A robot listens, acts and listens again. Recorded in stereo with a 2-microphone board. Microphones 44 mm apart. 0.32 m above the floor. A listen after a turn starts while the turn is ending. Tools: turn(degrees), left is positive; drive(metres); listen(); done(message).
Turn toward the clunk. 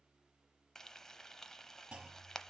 turn(degrees=-25)
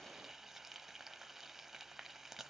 listen()
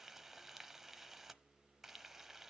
done("I heard a clunk, but can't make it out now. It was about straight ahead or 130° right.")